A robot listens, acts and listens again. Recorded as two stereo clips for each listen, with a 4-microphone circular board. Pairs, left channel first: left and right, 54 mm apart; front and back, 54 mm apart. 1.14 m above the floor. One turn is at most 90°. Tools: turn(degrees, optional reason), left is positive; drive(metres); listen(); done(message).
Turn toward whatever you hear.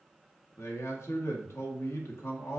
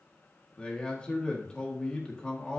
turn(degrees=70, reason="The man speaking: 70° left.")
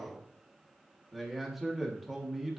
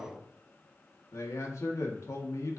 done("Found it: a man speaking, straight ahead.")